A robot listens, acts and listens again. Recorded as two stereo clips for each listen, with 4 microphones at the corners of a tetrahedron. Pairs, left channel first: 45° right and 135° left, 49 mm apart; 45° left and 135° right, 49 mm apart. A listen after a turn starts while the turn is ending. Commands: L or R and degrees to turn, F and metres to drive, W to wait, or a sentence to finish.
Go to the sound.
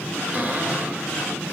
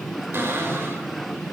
R170
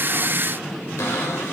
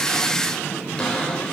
R25
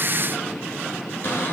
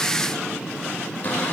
W
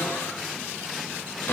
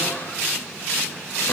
W
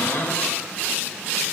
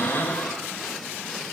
F1.0
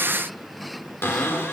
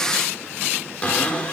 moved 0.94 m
R15
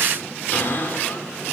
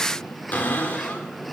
F1.0
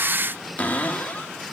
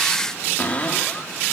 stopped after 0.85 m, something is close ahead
Arrived at the cupboard door, straight ahead.